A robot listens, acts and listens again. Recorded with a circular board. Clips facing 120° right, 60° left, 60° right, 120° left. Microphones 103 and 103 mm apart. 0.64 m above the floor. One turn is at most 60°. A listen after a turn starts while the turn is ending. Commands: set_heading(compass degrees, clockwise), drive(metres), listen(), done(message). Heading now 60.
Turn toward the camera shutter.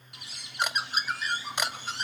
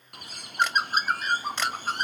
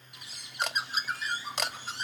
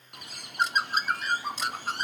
set_heading(105)
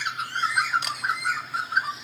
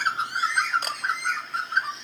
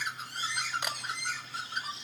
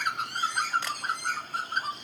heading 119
set_heading(104)
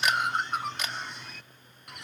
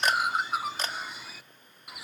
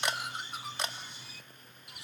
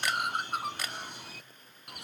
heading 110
done("Facing the camera shutter.")